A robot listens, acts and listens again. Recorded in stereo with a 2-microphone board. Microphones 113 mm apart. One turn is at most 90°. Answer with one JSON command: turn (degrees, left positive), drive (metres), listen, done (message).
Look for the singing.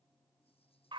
{"listen": true}
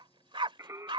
{"turn": -25}
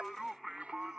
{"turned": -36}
{"done": "Found it: singing, straight ahead."}